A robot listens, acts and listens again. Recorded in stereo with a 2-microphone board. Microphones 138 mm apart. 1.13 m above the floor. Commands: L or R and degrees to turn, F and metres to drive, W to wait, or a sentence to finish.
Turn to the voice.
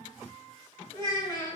L30
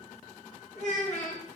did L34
L120
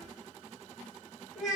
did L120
Facing the child speaking, 1 to 2 m away.